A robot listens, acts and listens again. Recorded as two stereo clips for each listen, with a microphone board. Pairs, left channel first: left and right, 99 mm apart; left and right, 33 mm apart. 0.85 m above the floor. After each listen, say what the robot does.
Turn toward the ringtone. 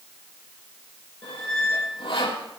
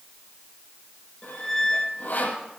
Keep listening.
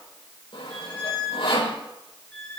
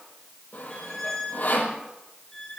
Keep listening.
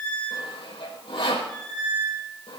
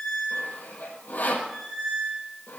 I can't make out a ringtone to turn to.